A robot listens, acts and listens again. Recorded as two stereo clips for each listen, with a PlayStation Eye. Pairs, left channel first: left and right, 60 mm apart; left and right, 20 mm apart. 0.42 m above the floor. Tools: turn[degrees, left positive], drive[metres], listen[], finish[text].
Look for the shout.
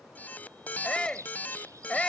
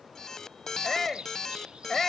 Thought: The shout: about 15° left or 165° left.
Action: turn[15]
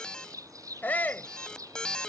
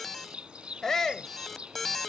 Thought: So it is at 150° left.
Action: turn[150]
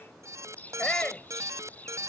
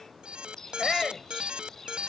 Thought: The shout is now 20° left.
Action: turn[20]
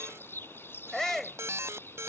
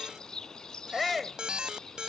Action: finish[Facing the shout.]